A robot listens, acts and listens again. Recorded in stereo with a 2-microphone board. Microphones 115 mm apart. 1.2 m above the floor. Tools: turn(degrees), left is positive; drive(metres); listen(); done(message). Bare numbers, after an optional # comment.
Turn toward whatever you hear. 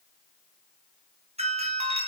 # The doorbell: about 70° right or 110° right.
turn(-70)
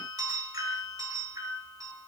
# So it is at 35° right.
turn(-35)
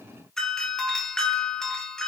done("Found it: a doorbell, straight ahead.")